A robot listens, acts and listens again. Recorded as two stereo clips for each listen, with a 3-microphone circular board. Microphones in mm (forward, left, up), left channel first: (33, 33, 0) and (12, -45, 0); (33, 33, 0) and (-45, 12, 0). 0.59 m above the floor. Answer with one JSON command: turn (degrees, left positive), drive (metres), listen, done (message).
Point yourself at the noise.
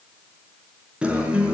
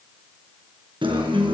{"turn": 175}
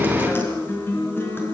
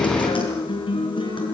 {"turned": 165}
{"turn": 10}
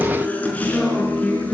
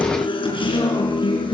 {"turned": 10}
{"done": "Facing the guitar."}